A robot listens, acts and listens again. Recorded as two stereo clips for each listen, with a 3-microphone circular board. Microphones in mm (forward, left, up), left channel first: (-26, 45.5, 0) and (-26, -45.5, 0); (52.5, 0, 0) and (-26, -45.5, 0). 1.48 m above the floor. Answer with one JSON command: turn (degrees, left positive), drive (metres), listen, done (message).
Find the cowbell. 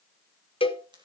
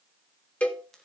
{"turn": 105}
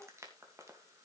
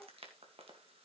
{"listen": true}
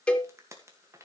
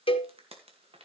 {"turn": 10}
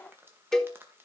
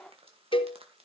{"done": "Facing the cowbell."}